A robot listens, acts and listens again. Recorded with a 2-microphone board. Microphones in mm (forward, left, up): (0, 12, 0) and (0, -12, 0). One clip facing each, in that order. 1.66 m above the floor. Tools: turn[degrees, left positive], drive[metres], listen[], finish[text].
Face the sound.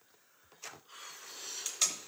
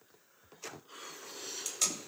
Action: turn[30]
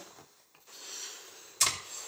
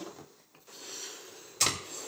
Thought: So it is at 15° right.
Action: turn[-15]
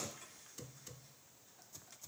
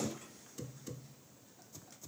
Action: listen[]
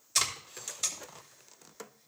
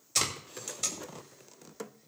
Action: finish[Facing the tape being pulled, 2 to 4 m away.]